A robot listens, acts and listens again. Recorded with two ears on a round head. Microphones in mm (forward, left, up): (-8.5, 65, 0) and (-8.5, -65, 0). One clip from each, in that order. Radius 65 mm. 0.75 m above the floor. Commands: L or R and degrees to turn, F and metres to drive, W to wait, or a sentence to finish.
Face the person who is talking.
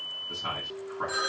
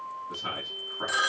L30
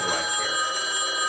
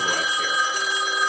W
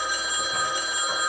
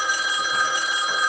W
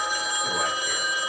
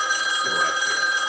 I heard a man speaking, but can't make it out now. It was about 20° right or 140° left.